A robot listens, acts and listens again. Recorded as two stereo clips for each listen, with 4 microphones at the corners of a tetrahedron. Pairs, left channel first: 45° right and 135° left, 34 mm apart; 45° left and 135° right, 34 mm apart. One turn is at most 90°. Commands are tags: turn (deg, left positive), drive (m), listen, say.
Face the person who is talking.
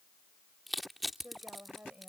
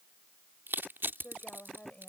<turn deg="85"/>
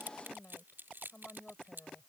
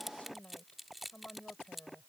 <say>Facing the woman speaking.</say>